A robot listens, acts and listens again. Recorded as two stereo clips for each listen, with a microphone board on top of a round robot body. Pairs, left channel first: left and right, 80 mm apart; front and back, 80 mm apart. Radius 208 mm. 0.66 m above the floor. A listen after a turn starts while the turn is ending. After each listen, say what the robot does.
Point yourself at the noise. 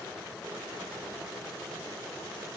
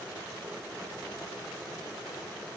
Keep listening.
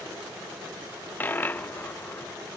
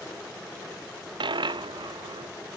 Turn 155° left.
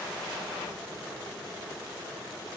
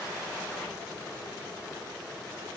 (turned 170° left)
Turn 15° right.
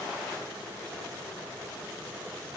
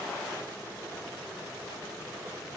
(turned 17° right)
Facing where the dropped coin came from. I can't hear it now.